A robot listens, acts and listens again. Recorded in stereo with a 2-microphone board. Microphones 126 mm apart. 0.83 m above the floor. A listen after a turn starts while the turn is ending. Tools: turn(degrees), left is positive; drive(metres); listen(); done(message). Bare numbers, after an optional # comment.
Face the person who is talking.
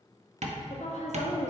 # The woman speaking: about 60° left or 120° left.
turn(60)
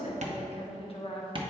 # So it is at 55° left.
turn(55)
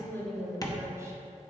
# The woman speaking is now 25° right.
turn(-25)
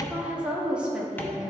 # The woman speaking is now 10° right.
turn(-10)
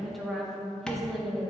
done("Found it: a woman speaking, straight ahead.")